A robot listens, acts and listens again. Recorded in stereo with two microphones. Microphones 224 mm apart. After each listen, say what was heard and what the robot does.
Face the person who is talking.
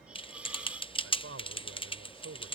Turn 90° right.
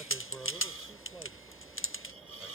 Found it: a man speaking, straight ahead.